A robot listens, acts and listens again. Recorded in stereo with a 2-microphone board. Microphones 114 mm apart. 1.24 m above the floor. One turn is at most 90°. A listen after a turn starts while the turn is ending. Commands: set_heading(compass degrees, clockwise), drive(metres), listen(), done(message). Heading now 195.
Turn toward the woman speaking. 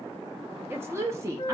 set_heading(220)
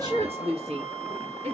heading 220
set_heading(310)
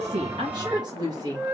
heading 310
set_heading(340)
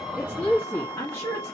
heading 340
set_heading(315)
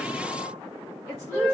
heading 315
done("Facing the woman speaking, 2 to 4 m away.")